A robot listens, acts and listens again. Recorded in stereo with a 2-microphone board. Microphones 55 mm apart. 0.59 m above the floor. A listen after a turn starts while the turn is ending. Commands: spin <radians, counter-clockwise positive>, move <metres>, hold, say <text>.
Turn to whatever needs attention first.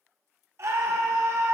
spin -0.96
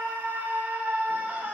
spin -0.61
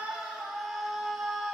say Facing the scream, 1 to 2 m away.